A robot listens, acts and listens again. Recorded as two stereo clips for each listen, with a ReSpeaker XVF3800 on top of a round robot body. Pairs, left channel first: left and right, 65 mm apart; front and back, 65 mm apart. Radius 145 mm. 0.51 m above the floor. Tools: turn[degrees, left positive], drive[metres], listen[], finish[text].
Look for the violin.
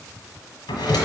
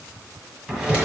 Action: listen[]
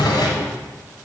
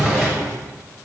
Action: listen[]
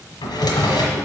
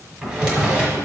Action: finish[I can't make out a violin to turn to.]